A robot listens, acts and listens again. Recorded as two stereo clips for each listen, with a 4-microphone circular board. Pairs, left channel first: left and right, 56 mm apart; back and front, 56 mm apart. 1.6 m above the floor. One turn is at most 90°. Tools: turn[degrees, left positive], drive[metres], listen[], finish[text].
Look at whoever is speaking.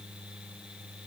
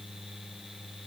Action: listen[]
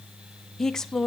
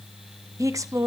Thought: The woman speaking: 10° left.
Action: turn[10]
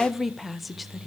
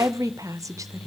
Action: finish[Found it: a woman speaking, straight ahead, under 1 m away.]